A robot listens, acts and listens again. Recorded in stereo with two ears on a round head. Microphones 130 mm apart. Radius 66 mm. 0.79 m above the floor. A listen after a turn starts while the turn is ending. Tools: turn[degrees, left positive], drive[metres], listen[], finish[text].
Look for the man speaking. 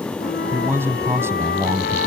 Thought: The man speaking: about 20° right or 160° right.
Action: turn[-20]
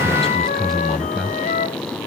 Action: turn[30]
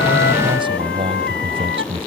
Thought: So it is at 40° right.
Action: turn[-40]
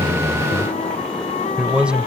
Action: finish[Facing the man speaking.]